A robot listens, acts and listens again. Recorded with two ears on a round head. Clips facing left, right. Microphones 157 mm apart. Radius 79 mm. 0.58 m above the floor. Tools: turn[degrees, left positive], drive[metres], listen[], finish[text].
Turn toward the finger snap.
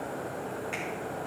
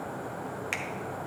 Action: turn[-90]
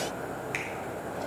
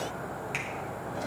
Action: listen[]
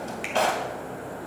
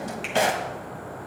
Action: listen[]
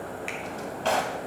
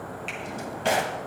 Action: finish[Facing where the finger snap came from. I can't hear it now.]